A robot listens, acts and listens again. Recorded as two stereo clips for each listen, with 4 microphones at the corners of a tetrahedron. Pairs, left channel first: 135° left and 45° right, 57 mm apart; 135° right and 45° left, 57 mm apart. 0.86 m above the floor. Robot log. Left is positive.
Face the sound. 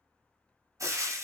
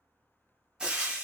note: The frying: 30° right.
cmd yaw -30
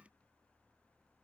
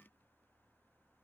cmd idle
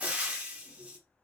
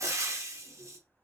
note: The frying is now 20° left.
cmd yaw +20
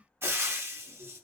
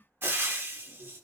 end: Found it: frying, straight ahead.